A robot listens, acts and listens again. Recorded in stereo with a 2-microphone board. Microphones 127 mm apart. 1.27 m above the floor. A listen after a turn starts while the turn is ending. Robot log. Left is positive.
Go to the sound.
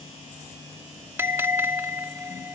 note: The bell: about 20° right or 160° right.
cmd yaw -20
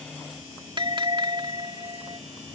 note: So it is at 140° right.
cmd yaw -140
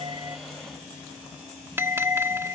note: The bell is now 20° right.
cmd yaw -20
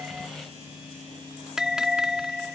cmd fwd 1.0
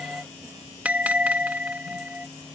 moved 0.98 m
note: The bell is now 15° right.
cmd yaw -15
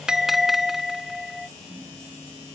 cmd fwd 1.0
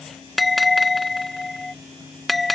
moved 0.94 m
cmd fwd 1.0
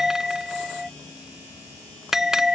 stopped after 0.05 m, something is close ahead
end: I am next to the bell.